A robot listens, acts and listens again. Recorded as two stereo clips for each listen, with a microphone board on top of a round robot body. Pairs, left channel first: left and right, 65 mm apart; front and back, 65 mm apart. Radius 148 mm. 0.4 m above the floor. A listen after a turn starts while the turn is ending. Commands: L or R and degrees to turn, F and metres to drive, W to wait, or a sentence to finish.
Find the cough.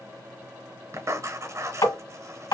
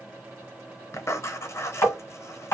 W
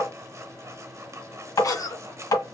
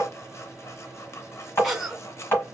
L95
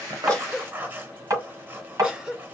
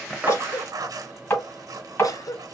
R15
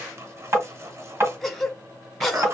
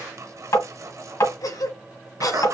Found it: a cough, straight ahead, 1 to 2 m away.